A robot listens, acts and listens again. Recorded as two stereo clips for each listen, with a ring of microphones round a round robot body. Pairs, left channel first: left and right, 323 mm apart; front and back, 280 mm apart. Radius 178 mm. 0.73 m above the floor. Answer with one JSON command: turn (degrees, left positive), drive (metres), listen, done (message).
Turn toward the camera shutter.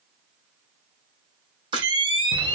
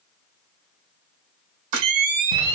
{"turn": -165}
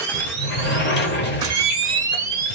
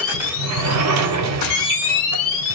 {"turn": -10}
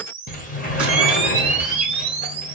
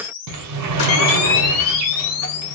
{"done": "Found it: a camera shutter, straight ahead."}